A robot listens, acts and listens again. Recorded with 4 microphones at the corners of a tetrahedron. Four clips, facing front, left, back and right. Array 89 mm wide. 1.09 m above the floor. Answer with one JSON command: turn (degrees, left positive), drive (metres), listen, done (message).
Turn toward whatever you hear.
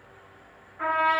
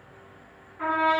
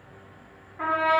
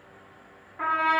{"turn": -115}
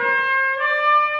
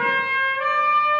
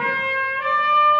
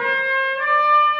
{"turn": -10}
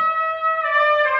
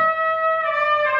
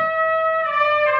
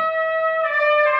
{"done": "Found it: a trumpet, straight ahead."}